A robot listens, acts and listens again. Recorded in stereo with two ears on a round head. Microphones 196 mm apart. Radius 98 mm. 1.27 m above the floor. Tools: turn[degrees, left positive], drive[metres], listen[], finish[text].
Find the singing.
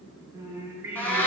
Action: turn[-30]
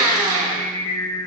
Thought: So it is at 45° left.
Action: turn[45]
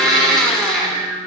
Thought: The singing is now 40° left.
Action: turn[40]
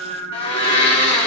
Thought: The singing is now 15° left.
Action: turn[15]
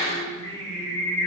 Thought: The singing is now 20° left.
Action: turn[20]
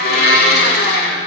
Action: listen[]
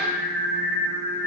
Action: finish[Facing the singing, 2 to 4 m away.]